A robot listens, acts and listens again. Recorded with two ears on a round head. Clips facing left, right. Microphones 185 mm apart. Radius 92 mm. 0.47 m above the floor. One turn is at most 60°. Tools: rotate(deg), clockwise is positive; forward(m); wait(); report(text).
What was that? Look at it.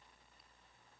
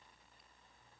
wait()
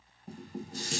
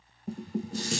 rotate(60)
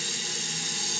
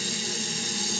rotate(40)
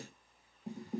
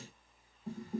rotate(-15)
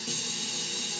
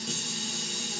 report("Facing the dishes clattering, under 1 m away.")